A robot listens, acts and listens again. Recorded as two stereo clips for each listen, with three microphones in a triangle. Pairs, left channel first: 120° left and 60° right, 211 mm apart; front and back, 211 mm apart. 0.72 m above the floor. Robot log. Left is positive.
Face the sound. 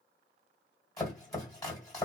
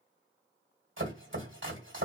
note: The chopping: 165° right.
cmd yaw -165
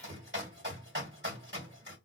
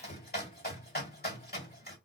note: The chopping is now 35° right.
cmd yaw -35
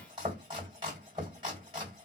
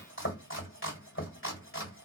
end: Found it: chopping, straight ahead.